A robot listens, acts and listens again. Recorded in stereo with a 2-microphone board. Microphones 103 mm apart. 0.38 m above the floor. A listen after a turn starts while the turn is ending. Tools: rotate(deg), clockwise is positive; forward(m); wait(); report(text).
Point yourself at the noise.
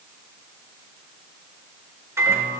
rotate(25)
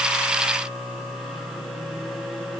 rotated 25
report("Facing the microwave, over 4 m away.")